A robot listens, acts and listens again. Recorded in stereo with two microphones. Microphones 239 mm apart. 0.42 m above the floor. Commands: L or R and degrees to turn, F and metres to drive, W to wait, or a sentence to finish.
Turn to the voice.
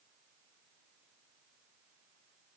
W
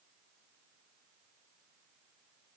W
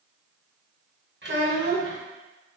R45
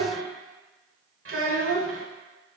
R80
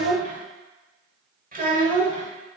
R40
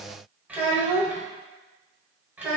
Facing the child speaking.